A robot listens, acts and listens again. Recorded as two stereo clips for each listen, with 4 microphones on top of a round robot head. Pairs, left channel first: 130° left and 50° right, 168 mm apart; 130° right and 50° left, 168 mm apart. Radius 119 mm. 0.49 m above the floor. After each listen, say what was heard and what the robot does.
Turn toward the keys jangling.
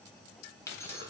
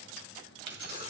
The keys jangling: 55° left. Turn 55° left.
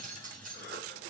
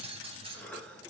The keys jangling is now 10° right. Turn 10° right.
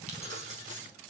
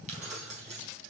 Found it: keys jangling, straight ahead.